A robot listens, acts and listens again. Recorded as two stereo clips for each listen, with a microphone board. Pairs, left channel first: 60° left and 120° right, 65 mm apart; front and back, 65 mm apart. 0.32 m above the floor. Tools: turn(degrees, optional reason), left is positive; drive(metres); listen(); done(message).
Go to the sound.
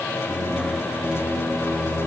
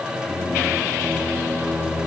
turn(degrees=55, reason="The singing: 55° left.")
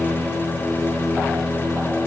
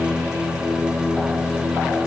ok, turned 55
turn(degrees=-20, reason="The singing is now 20° right.")
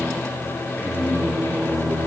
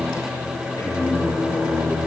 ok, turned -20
drive(metres=1.0)
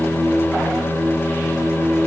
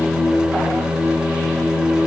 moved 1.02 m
drive(metres=1.0)
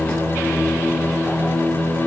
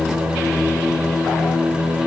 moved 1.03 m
drive(metres=1.0)
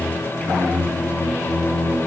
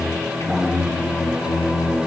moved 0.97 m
drive(metres=1.0)
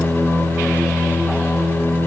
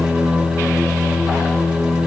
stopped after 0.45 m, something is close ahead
done("I am next to the singing.")